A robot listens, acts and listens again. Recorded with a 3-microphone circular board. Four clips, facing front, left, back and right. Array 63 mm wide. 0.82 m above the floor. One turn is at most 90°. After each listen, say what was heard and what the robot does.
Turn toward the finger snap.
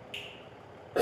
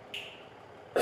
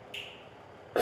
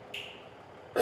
The finger snap: 35° left. Turn 35° left.
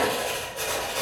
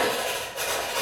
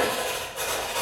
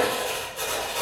Keep listening.
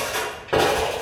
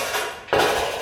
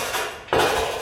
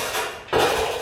Keep listening.
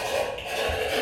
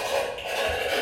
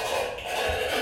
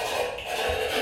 Facing where the finger snap came from. I can't hear it now.